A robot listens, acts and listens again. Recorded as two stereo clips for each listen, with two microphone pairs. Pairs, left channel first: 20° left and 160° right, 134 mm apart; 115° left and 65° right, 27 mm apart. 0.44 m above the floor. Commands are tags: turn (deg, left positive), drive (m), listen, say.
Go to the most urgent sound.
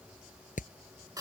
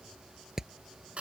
<listen/>
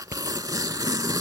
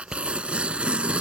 <listen/>
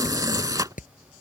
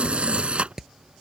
<say>I can't make out anything urgent to turn to.</say>